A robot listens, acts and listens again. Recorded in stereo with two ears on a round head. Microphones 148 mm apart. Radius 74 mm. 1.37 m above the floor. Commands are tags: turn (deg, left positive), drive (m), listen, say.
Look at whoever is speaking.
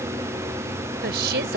<turn deg="-70"/>
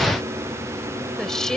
<say>Found it: a woman speaking, straight ahead.</say>